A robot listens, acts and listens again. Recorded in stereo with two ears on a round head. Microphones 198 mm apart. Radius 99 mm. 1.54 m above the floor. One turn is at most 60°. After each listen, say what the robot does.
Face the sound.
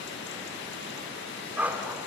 Turn 30° right.
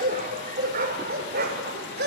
Turn 60° right.
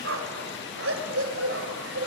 Turn 60° right.
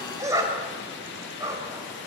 Turn 15° right.
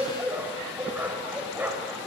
Turn 10° right.
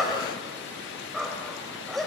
Facing the dog barking.